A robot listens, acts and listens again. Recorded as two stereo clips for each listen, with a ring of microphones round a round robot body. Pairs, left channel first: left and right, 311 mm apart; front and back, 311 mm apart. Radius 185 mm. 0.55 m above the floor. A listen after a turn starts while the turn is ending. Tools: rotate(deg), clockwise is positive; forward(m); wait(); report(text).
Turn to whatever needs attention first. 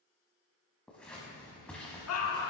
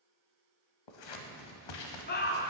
rotate(-55)
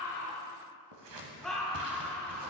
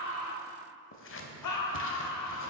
report("Found it: a scream, straight ahead.")